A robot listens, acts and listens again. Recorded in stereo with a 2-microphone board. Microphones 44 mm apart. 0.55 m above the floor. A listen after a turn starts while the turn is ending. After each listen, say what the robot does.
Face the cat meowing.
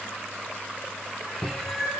Turn 30° left.
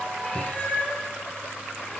Turn 150° left.
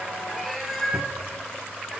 Found it: a cat meowing, straight ahead, 2 to 4 m away.